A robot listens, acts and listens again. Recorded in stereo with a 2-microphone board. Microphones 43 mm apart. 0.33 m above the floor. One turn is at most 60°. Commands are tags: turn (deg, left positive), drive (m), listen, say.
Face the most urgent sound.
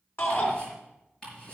<turn deg="60"/>
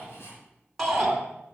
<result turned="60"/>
<say>Facing the shout.</say>